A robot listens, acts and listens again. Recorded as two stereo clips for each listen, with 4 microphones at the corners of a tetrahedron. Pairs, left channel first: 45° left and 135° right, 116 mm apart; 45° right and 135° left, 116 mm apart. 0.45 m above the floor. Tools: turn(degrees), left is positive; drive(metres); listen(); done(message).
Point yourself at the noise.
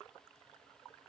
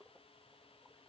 listen()
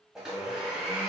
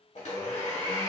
turn(degrees=-50)
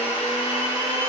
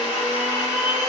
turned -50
done("Facing the blender.")